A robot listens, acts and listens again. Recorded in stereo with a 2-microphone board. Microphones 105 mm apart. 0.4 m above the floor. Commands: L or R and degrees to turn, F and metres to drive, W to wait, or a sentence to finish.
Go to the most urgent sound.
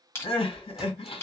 L60
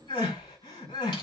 L55
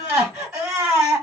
R10
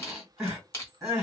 F1.0
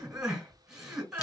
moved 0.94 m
R10
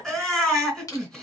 F1.0
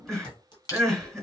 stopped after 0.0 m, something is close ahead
I am next to the crying.